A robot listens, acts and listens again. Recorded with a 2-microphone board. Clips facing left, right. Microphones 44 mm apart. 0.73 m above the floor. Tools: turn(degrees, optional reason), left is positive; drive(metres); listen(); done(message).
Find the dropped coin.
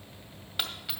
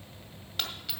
turn(degrees=30)
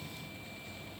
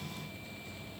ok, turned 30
listen()
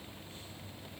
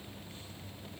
done("I heard a dropped coin, but can't make it out now. It was about 15° right or 135° left.")